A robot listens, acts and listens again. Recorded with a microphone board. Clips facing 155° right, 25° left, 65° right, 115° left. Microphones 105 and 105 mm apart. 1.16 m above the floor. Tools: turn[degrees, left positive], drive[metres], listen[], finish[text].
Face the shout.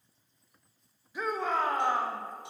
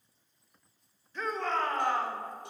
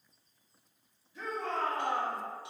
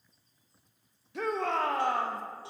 Thought: The shout: 120° left.
Action: turn[120]
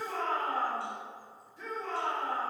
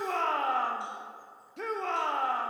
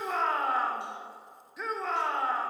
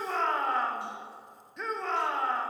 Thought: The shout is now 20° left.
Action: turn[20]
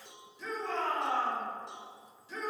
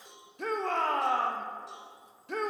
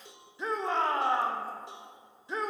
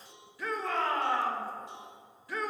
Action: finish[Found it: a shout, straight ahead.]